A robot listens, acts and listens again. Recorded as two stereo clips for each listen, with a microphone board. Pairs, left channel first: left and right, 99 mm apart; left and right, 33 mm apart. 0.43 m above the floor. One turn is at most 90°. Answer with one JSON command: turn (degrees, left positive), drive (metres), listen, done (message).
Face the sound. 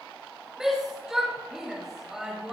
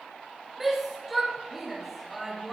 {"turn": -30}
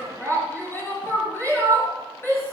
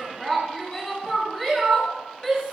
{"turn": 25}
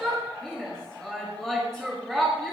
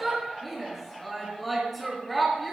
{"done": "Facing the shout."}